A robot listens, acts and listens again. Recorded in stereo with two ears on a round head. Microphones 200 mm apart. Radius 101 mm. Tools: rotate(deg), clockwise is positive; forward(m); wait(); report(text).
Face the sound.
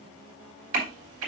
rotate(65)
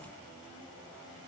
wait()
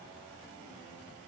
report("I heard a crack, but can't make it out now. It was about straight ahead or 50° right.")